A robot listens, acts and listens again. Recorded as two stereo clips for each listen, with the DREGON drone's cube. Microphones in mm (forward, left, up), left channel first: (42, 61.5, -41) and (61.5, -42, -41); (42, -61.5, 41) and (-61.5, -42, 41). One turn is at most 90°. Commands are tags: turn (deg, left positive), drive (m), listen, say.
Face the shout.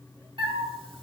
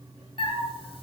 <listen/>
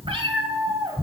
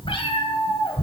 <listen/>
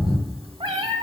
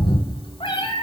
<say>I can't make out a shout, only a cat meowing.</say>